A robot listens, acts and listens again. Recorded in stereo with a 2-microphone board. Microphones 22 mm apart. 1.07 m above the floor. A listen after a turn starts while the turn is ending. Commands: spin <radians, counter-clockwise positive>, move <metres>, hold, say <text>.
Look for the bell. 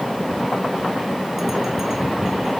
hold
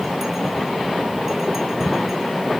hold
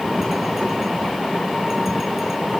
say I can't make out a bell.